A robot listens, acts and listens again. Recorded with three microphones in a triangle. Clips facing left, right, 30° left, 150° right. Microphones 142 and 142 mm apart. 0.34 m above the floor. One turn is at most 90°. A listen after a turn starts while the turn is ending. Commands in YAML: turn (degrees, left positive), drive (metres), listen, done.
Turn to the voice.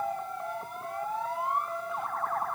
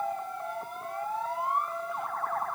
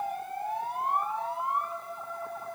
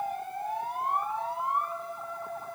listen: true
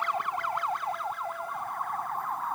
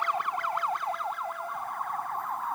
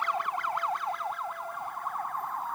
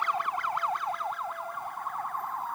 listen: true
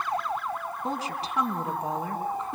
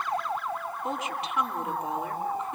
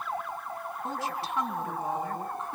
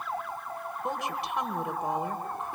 turn: 90
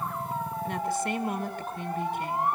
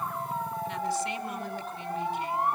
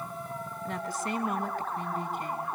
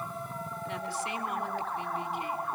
turn: 65
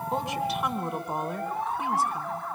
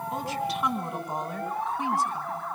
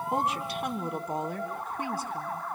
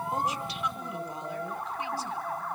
done: "Found it: a woman speaking, straight ahead, 2 to 4 m away."